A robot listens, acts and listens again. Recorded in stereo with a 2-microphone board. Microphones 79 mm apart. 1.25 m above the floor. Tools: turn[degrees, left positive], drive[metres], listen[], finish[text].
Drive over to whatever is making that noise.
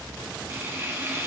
Thought: The frying: about 30° right or 150° right.
Action: turn[-30]
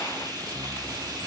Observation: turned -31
Thought: So it is at 115° right.
Action: turn[-115]
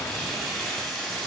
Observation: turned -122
Action: drive[1.0]
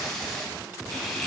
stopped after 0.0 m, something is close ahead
Action: finish[Blocked. The frying is further on, straight ahead.]